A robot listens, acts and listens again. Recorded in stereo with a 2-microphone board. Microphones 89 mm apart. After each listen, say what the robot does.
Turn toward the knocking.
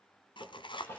Turn 65° left.
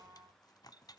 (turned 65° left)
Keep listening.
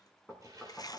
Found it: knocking, straight ahead.